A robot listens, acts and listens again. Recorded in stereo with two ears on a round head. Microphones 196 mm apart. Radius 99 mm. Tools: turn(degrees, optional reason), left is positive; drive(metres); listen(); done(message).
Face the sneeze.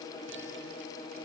listen()
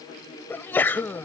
turn(degrees=30)
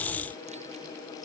listen()
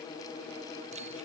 done("I heard a sneeze, but can't make it out now. It was about 20° right or 140° left.")